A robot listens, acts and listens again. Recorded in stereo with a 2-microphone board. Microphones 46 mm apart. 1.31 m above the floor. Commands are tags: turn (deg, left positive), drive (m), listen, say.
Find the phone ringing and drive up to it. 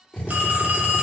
<turn deg="-35"/>
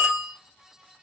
<drive m="1.0"/>
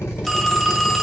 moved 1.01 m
<drive m="1.0"/>
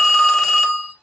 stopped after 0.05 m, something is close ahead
<turn deg="10"/>
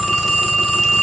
<say>Arrived at the phone ringing, straight ahead.</say>